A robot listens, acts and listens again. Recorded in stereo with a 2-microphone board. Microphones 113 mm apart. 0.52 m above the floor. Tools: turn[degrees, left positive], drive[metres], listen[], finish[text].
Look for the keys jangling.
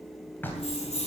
Thought: The keys jangling: about 65° left or 115° left.
Action: turn[65]
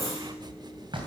Action: listen[]
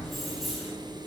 Action: listen[]
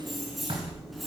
Action: finish[Facing the keys jangling.]